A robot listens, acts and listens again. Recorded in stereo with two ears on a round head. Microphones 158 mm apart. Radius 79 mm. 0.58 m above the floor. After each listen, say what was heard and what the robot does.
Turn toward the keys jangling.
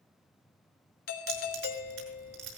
Turn 90° right.
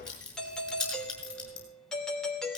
Found it: keys jangling, straight ahead, over 4 m away.